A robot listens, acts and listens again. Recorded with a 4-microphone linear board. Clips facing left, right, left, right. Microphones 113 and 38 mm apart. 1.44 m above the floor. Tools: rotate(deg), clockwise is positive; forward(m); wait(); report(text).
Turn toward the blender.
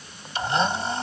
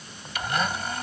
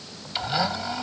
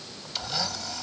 rotate(-30)
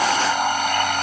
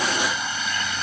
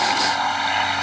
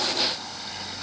rotate(-120)
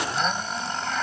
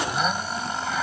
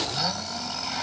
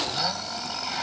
report("Found it: a blender, straight ahead.")